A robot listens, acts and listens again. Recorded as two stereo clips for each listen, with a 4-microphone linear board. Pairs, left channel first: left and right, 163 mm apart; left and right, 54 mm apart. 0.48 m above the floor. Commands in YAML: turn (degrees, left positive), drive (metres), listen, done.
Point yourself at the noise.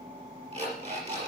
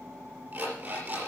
turn: -40
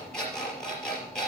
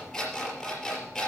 done: "Found it: an alarm clock, straight ahead, over 4 m away."